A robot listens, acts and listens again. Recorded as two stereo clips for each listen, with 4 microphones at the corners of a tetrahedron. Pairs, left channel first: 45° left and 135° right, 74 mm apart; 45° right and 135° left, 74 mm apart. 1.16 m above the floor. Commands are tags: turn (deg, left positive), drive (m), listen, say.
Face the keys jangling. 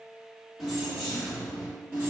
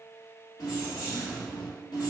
<turn deg="-65"/>
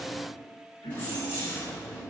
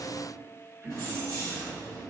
<turn deg="-25"/>
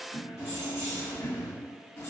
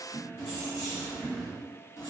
<turn deg="-10"/>
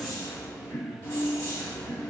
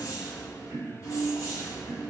<say>Found it: keys jangling, straight ahead, 2 to 4 m away.</say>